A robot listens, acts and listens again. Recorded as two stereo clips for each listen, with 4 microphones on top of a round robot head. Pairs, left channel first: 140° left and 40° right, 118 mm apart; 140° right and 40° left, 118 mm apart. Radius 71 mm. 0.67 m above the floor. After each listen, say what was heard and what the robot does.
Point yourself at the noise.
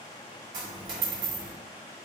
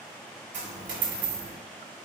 The dropped coin: 15° left. Turn 15° left.
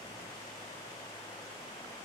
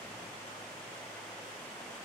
Facing where the dropped coin came from. I can't hear it now.